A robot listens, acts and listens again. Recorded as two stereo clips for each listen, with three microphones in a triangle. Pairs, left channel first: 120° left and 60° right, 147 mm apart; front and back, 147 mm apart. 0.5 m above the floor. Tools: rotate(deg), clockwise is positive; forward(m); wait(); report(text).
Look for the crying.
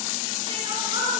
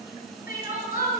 report("Facing the crying.")